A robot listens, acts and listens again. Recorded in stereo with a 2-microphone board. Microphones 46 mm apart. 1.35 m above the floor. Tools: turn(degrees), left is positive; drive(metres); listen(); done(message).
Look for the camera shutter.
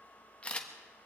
turn(degrees=25)
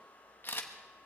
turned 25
turn(degrees=130)
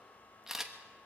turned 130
turn(degrees=-10)
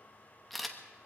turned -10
done("Found it: a camera shutter, straight ahead.")